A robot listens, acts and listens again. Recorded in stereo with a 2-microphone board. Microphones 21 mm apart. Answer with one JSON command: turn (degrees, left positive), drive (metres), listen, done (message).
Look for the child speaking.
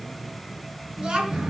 {"turn": -45}
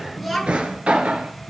{"done": "Found it: a child speaking, straight ahead."}